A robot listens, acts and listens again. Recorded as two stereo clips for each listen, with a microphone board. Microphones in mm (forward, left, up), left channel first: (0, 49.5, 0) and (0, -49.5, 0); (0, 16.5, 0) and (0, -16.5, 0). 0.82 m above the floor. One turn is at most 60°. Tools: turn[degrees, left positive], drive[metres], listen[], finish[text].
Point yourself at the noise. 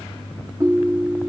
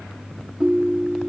Thought: The ringtone: about 30° right or 150° right.
Action: turn[-30]
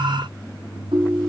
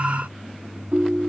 Thought: So it is at 120° right.
Action: turn[-60]
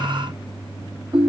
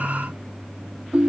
Thought: The ringtone is now 65° right.
Action: turn[-60]
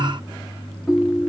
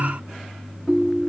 Action: finish[Facing the ringtone.]